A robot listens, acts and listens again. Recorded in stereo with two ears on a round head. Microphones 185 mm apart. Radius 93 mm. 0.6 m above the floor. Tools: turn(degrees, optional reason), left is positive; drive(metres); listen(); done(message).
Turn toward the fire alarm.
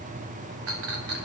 listen()
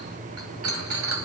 listen()
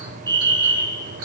turn(degrees=-20, reason="The fire alarm: about 20° right or 160° right.")
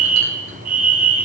turn(degrees=-135, reason="So it is at 135° right.")
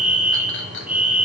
done("Found it: a fire alarm, straight ahead.")